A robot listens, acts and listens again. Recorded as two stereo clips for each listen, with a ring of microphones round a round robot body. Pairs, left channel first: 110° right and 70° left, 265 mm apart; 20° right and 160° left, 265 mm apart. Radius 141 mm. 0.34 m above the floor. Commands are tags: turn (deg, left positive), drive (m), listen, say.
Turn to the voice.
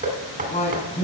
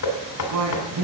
<turn deg="180"/>
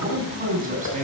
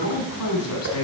<say>Facing the man speaking, 2 to 4 m away.</say>